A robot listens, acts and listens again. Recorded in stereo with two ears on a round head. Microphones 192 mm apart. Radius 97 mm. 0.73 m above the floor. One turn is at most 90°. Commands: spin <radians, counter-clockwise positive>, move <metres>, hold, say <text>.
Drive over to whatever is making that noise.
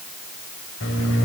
spin 1.13
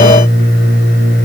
spin 0.79
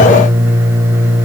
spin -0.17
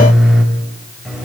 move 1.0
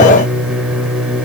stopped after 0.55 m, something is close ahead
say Something is in my way. I am facing the microwave but have not reached it.